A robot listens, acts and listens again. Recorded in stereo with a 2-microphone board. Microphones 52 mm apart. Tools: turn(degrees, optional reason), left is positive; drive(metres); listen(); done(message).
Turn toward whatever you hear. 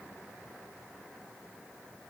listen()
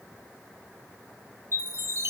turn(degrees=-55, reason="The chime: about 55° right or 125° right.")
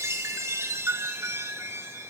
turn(degrees=-65, reason="So it is at 65° right.")
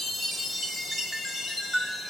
done("Facing the chime.")